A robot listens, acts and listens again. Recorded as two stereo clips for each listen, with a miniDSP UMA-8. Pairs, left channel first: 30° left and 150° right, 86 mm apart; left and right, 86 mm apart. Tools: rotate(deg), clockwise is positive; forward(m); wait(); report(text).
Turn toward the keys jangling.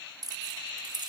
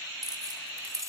rotate(135)
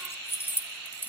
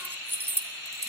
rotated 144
rotate(35)
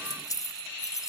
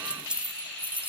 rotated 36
rotate(20)
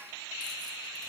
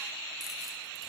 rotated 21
wait()
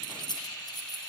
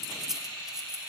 report("Facing the keys jangling, 2 to 4 m away.")